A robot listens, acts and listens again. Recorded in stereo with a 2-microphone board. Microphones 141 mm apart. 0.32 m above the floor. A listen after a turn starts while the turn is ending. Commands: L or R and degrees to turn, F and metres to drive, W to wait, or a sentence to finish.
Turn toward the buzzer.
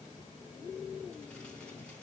W
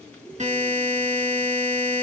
R55
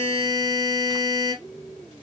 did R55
R40
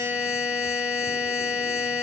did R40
R10
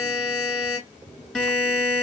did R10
Found it: a buzzer, straight ahead.